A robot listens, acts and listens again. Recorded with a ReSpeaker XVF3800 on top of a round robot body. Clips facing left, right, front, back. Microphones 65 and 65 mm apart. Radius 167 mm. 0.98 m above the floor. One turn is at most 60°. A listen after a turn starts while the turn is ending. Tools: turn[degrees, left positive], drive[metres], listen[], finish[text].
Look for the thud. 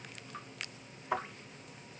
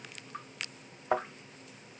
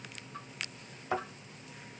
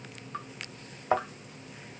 Thought: The thud: 130° right.
Action: turn[-60]
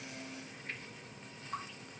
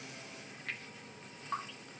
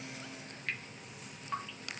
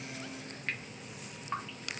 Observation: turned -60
Thought: Nothing new. It was at 70° right.
Action: turn[-60]
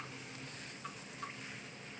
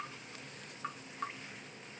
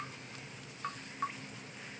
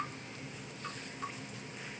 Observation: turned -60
Thought: Nothing new. It was at 10° right.
Action: turn[-10]
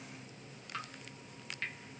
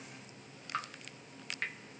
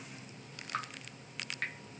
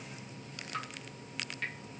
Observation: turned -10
Action: finish[Facing where the thud came from. I can't hear it now.]